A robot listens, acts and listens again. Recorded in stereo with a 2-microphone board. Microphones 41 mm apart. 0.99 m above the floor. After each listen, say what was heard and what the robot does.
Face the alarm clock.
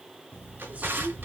The alarm clock: about 70° left or 110° left. Turn 70° left.
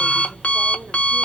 So it is at 30° left. Turn 30° left.
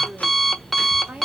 Found it: an alarm clock, straight ahead, 1 to 2 m away.